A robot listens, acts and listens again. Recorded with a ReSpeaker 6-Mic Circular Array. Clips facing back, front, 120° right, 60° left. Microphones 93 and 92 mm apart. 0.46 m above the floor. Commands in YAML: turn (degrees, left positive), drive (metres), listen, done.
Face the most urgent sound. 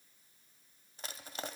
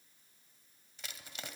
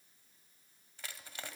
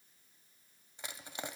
listen: true
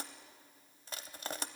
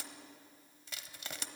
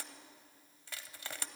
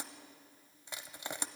listen: true
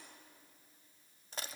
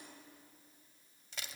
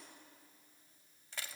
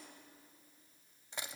done: "I can't make out anything urgent, only crushing."